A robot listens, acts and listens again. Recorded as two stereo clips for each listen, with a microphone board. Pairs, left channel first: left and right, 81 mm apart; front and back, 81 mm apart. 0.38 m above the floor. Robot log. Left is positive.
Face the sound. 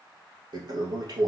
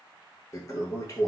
note: The toilet flushing: 50° right.
cmd yaw -50
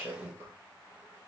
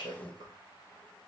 note: The toilet flushing is now 25° right.
cmd yaw -25
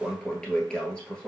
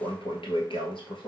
note: The toilet flushing is now 10° left.
cmd yaw +10
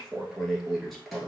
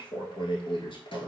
end: Found it: a toilet flushing, straight ahead, 1 to 2 m away.